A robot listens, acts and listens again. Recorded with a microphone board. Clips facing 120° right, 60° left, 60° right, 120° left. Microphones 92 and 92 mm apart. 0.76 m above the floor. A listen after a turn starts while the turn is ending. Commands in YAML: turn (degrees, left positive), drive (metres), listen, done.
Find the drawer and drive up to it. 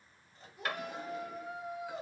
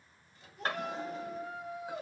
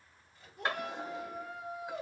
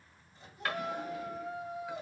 drive: 1.0
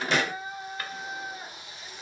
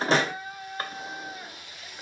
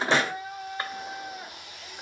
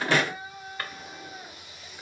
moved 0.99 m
drive: 1.0
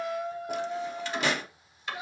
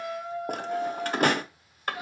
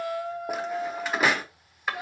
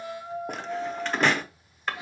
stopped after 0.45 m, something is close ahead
turn: 25
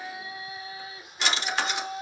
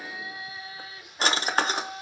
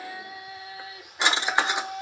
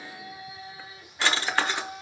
turn: 10
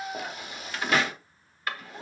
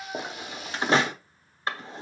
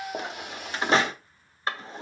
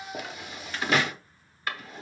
done: "I am next to the drawer."